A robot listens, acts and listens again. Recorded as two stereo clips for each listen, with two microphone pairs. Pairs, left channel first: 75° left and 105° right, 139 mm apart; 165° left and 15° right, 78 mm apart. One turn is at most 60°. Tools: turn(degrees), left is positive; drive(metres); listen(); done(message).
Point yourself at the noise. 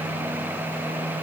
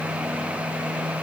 listen()
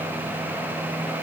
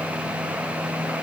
listen()
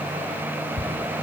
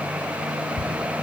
turn(degrees=-60)
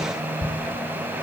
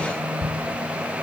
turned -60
turn(degrees=-25)
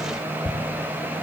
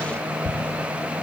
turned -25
done("Found it: ticking, straight ahead.")